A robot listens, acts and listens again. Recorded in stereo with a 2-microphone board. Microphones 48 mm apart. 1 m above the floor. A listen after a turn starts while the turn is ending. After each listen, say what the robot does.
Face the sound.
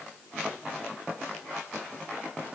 Keep listening.
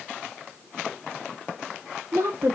Turn 55° right.
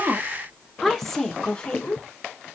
Turn 25° left.
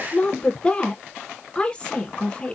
Turn 20° left.
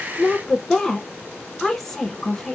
Facing the woman speaking, 1 to 2 m away.